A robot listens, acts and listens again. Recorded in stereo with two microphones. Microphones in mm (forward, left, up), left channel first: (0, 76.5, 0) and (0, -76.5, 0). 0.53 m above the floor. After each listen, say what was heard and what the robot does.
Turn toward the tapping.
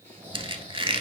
Keep listening.
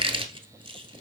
Keep listening.
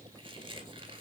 I can't make out tapping to turn to.